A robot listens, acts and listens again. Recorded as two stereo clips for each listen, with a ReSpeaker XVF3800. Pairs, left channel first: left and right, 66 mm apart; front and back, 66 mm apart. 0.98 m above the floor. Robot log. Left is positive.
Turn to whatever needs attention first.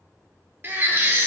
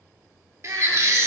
note: The baby crying: 145° right.
cmd yaw -145
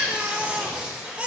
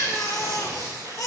note: The baby crying is now 25° right.
cmd yaw -25
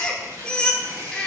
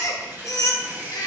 note: The baby crying is now 15° left.
cmd yaw +15
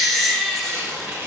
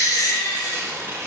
end: Facing the baby crying, 1 to 2 m away.